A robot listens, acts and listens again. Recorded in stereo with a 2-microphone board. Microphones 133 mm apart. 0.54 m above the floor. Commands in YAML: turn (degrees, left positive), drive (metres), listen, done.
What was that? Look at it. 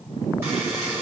turn: -20
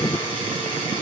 turn: -140
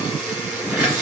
turn: -10
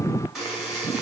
done: "Facing the buzzer."